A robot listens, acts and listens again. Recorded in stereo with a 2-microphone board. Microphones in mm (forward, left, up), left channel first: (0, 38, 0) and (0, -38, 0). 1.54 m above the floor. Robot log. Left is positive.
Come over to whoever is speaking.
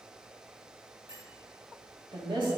note: The woman speaking: about 70° right or 110° right.
cmd yaw -70
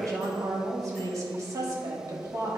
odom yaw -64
note: So it is at 45° right.
cmd yaw -45
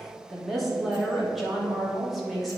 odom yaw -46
cmd fwd 1.0
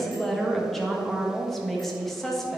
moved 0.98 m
cmd fwd 1.0
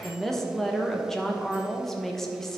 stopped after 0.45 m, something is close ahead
end: I am next to the woman speaking.